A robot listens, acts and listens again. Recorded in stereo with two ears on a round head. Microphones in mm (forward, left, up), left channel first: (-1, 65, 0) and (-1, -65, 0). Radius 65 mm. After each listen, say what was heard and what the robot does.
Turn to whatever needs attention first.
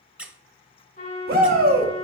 The shout: about 70° right or 110° right. Turn 70° right.
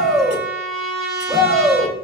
Found it: a shout, straight ahead, 2 to 4 m away.